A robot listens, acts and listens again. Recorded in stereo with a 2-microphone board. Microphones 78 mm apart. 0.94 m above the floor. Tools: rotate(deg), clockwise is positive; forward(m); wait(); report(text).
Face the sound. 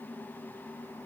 wait()
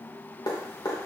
rotate(-70)
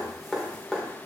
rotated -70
report("Facing the dripping, 2 to 4 m away.")